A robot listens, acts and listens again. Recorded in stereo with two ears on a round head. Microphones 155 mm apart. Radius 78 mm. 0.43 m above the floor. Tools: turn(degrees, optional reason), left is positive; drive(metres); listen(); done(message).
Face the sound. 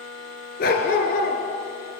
turn(degrees=50, reason="The dog barking: about 50° left or 130° left.")
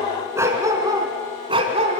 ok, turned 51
turn(degrees=-40, reason="So it is at 40° right.")
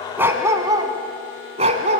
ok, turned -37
turn(degrees=-45, reason="The dog barking is now 45° right.")
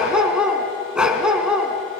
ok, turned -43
done("Facing the dog barking.")